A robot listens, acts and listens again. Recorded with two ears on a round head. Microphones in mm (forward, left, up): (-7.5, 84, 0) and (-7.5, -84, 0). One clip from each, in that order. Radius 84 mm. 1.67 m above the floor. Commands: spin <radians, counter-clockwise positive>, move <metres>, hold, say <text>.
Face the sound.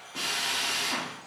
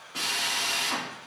spin -0.35
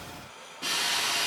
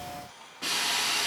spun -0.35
say Facing the drill, 1 to 2 m away.